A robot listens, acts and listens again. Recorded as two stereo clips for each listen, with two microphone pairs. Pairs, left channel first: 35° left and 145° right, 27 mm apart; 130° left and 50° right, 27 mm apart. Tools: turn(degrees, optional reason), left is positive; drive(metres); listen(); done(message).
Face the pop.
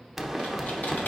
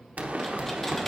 turn(degrees=-60, reason="The pop: 60° right.")
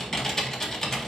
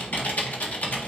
done("I heard a pop from this way, but can't make it out now.")